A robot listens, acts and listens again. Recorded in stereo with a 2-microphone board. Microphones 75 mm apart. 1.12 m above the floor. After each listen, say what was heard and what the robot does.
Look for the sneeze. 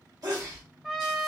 The sneeze: about 55° right or 125° right. Turn 55° right.
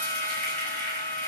Keep listening.
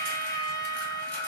I heard a sneeze, but can't make it out now. It was about straight ahead or 70° right.